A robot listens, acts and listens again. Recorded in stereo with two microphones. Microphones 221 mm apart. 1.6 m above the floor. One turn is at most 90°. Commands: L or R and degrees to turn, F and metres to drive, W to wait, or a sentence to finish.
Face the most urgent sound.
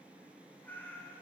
W
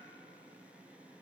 W
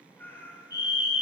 L50
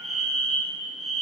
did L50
Found it: a fire alarm, straight ahead, over 4 m away.